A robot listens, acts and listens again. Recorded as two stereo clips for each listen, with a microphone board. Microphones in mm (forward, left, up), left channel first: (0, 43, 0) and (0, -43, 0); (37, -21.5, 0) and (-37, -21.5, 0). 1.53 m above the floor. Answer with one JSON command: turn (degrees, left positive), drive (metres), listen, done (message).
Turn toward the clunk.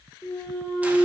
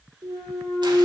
{"turn": 145}
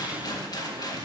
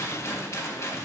{"done": "Facing where the clunk came from. I can't hear it now."}